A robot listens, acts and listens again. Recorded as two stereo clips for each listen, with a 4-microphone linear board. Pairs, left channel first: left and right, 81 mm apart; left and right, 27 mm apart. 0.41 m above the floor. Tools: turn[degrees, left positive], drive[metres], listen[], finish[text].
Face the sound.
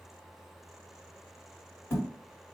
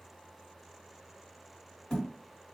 Thought: The thud: about 30° left or 150° left.
Action: turn[30]
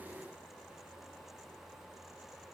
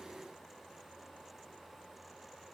Action: listen[]
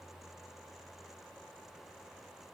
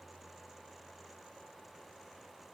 Action: finish[I heard a thud, but can't make it out now. It was about straight ahead or 120° left.]